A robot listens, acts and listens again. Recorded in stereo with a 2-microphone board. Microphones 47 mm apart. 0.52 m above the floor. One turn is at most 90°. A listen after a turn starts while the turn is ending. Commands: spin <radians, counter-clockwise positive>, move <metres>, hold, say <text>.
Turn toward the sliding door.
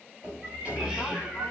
spin -0.52
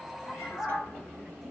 spin -1.57
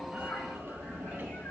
spin -0.96
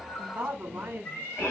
hold
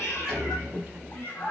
spin -0.35
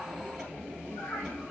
spin -0.17
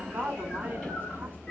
say Facing the sliding door.